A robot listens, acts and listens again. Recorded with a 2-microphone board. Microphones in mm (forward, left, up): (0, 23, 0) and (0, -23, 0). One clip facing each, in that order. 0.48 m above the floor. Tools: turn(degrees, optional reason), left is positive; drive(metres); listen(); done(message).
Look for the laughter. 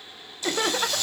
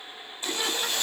turn(degrees=55, reason="The laughter: about 55° left or 125° left.")
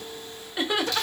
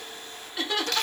turn(degrees=20, reason="So it is at 20° left.")
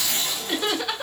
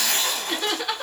done("Facing the laughter.")